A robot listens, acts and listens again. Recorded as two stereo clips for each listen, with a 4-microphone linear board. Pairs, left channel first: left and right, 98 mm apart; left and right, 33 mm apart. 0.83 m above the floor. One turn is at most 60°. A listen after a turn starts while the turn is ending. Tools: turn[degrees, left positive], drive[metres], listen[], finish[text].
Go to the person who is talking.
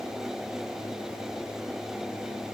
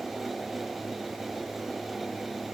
Action: listen[]
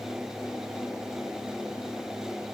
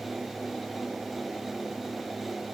Action: listen[]
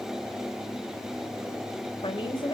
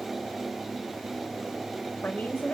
Thought: The woman speaking: about 60° left or 120° left.
Action: turn[60]
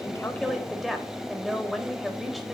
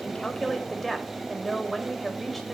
Action: drive[1.0]
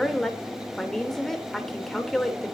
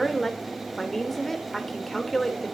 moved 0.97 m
Action: drive[1.0]
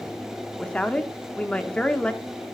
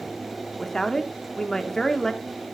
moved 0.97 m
Thought: The woman speaking is now 10° left.
Action: turn[10]
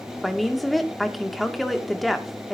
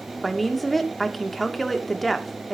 Action: drive[1.0]
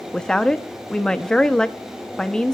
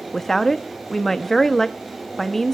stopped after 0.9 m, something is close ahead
Thought: The woman speaking is now 10° left.
Action: turn[10]
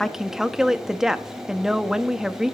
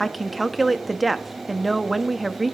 Action: finish[Arrived at the woman speaking, straight ahead.]